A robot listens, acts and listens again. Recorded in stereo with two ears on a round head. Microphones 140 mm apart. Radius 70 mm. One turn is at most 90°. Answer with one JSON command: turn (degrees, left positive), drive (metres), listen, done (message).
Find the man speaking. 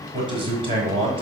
{"turn": -35}
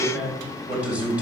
{"turn": -10}
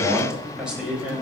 {"turn": -10}
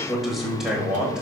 {"done": "Facing the man speaking."}